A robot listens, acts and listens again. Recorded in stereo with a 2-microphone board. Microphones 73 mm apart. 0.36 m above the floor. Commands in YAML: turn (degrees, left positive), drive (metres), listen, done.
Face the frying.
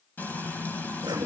turn: 25
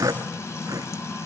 turn: 130
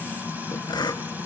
turn: -30
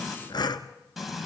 done: "Facing the frying, 2 to 4 m away."